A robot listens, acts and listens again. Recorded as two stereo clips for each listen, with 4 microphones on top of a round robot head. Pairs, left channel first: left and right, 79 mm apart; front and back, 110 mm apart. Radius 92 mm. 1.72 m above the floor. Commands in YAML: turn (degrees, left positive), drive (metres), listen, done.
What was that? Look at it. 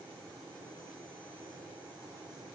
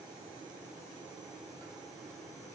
listen: true
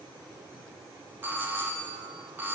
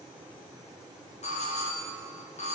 turn: -25
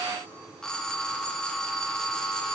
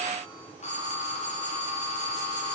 turn: 10
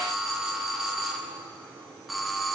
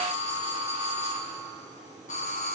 done: "Facing the doorbell, 2 to 4 m away."